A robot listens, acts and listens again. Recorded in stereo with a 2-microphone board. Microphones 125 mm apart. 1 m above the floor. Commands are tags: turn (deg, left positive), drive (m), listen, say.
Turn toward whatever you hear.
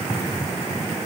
<listen/>
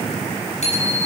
<turn deg="65"/>
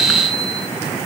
<listen/>
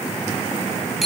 <say>Found it: a bicycle bell, straight ahead.</say>